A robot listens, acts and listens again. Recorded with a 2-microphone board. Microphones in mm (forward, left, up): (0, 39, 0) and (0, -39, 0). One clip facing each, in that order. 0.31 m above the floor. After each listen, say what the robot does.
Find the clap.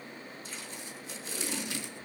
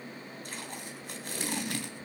Keep listening.
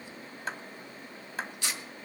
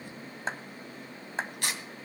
Turn 30° right.
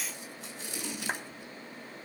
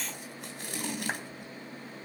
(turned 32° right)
Keep listening.
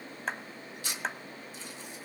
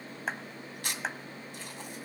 Facing the clap, 1 to 2 m away.